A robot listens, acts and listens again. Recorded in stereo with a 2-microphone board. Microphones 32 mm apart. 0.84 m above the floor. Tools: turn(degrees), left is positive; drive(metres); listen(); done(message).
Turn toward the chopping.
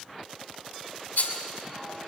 listen()
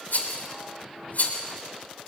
listen()
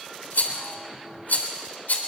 done("I can't make out chopping, only a rattle.")